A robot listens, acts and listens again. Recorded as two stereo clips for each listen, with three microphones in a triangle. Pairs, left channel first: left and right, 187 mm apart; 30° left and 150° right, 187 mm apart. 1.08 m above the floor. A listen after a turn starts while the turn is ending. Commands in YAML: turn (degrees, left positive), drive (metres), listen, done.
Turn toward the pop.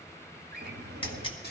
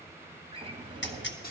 turn: 30
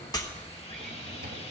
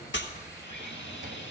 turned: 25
done: "I heard a pop from this way, but can't make it out now."